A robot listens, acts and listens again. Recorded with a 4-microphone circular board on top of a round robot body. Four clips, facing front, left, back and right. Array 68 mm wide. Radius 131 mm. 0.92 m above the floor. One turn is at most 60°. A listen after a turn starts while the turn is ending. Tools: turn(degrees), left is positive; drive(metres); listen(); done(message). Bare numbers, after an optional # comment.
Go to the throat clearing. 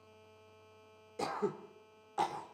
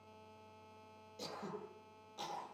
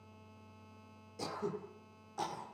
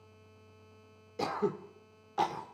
# The throat clearing: 65° right.
turn(-60)
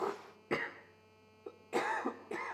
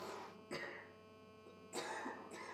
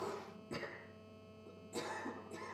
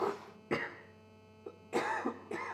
# The throat clearing is now 40° right.
turn(-40)
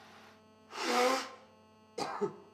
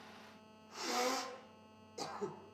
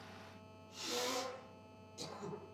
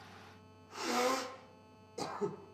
drive(1.0)
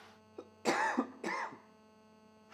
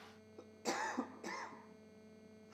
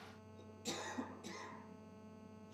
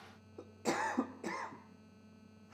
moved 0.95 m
# The throat clearing is now 10° right.
turn(-10)
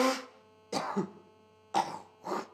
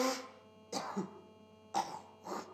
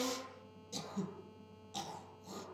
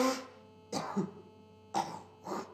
drive(1.0)
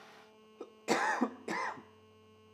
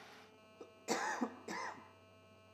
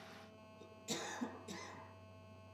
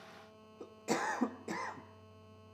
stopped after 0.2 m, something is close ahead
done("I am next to the throat clearing.")